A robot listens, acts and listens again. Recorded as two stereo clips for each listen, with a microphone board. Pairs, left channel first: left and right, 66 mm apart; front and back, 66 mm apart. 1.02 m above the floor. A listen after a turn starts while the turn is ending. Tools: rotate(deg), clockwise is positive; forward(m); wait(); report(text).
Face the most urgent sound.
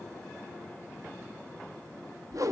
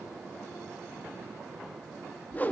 wait()
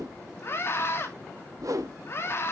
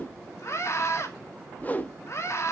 rotate(-40)
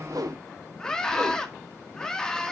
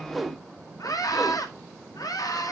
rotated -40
rotate(-10)
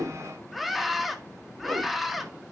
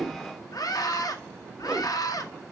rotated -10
report("Found it: a scream, straight ahead.")